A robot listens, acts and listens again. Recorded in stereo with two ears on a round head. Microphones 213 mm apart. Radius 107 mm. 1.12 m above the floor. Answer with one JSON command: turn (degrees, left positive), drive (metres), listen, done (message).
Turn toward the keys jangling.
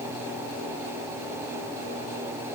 {"listen": true}
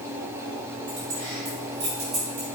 {"turn": -45}
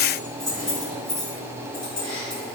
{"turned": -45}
{"done": "Facing the keys jangling, over 4 m away."}